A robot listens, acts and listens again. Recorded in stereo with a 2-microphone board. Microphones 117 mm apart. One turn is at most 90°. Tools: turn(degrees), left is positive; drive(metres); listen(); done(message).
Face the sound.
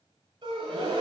turn(degrees=-40)
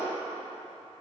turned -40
listen()
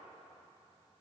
done("I heard a gasp, but can't make it out now. It was about straight ahead or 100° right.")